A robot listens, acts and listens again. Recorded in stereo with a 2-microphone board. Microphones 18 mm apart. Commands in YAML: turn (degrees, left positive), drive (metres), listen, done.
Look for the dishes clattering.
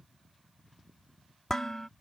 turn: 25
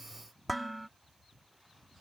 done: "Facing the dishes clattering."